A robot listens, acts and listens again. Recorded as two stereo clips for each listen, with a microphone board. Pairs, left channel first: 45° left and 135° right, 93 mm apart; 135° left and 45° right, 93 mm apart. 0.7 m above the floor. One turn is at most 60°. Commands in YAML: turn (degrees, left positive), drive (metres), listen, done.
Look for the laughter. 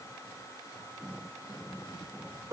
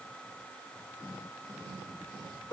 listen: true
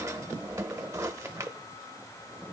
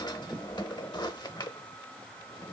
listen: true
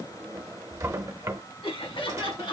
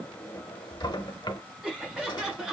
turn: 40
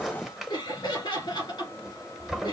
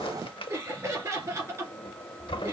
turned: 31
turn: 10
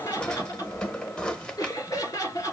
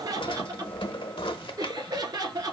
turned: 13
done: "Facing the laughter, 2 to 4 m away."